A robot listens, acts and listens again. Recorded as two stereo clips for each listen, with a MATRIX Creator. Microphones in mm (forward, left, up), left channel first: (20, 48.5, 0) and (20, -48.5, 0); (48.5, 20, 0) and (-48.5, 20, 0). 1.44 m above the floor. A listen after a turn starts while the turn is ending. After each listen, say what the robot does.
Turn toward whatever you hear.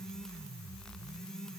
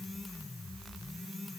Keep listening.
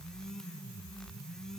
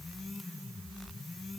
Keep listening.
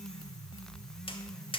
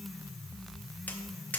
Turn 75° left.
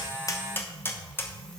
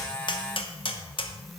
Turn 25° left.
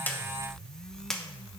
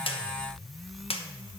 Found it: tapping, straight ahead.